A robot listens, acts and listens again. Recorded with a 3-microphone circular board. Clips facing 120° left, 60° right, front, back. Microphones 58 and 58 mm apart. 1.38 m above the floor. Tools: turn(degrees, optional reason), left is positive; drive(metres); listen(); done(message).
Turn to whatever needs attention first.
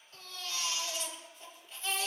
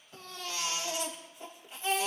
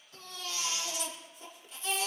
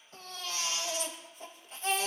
turn(degrees=-135, reason="The baby crying: 135° right.")
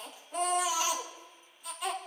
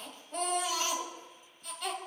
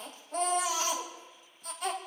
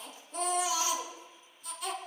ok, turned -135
turn(degrees=40, reason="The baby crying is now 40° left.")
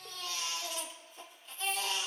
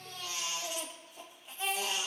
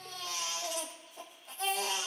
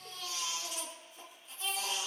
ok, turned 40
turn(degrees=15, reason="The baby crying is now 15° left.")
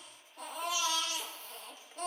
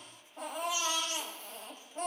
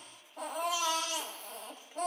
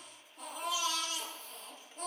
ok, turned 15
done("Found it: a baby crying, straight ahead.")